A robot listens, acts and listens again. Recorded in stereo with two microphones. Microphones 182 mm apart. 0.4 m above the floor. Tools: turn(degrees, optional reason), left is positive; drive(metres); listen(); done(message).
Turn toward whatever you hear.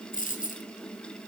turn(degrees=50, reason="The dropped coin: about 50° left or 130° left.")
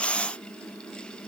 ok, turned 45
listen()
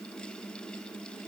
done("I heard a dropped coin, but can't make it out now. It was about 5° left or 85° left.")